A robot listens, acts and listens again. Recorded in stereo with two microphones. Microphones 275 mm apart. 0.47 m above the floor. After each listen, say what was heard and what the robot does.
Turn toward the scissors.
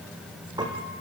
Keep listening.
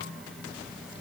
Keep listening.
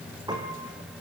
I can't make out scissors to turn to.